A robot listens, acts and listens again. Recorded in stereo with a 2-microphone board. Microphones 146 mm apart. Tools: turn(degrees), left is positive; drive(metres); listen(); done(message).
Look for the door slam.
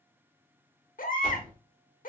turn(degrees=-65)
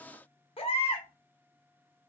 listen()
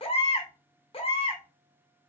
done("I heard a door slam, but can't make it out now. It was about straight ahead or 50° right.")